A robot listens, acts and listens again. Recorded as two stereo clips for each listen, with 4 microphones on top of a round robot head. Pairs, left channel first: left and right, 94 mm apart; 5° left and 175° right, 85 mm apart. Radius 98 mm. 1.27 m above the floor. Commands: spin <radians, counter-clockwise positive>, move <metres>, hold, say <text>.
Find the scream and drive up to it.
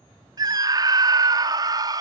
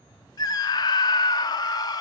spin -0.79
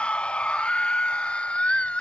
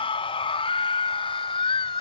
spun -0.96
spin 0.17
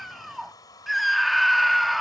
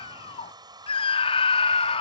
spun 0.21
move 1.0
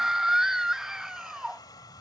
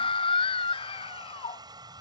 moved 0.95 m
move 1.0
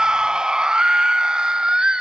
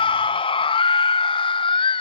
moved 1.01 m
spin -0.17
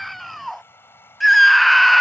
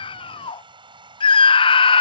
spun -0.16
move 1.0
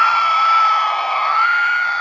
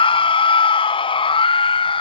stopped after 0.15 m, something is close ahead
say I am next to the scream.